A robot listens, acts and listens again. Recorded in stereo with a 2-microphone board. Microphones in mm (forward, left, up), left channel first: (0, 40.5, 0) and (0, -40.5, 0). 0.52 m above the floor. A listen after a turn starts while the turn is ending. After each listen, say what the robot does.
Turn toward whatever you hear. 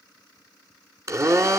Turn 40° right.
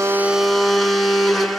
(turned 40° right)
Found it: a blender, straight ahead, 1 to 2 m away.